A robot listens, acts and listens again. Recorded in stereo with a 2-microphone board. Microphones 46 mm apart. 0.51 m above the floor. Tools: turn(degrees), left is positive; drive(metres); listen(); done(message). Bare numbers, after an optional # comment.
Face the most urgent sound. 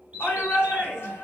# The shout: about 55° left or 125° left.
turn(55)
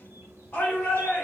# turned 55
# So it is at 60° left.
turn(60)
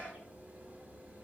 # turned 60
done("Found it: a shout, straight ahead.")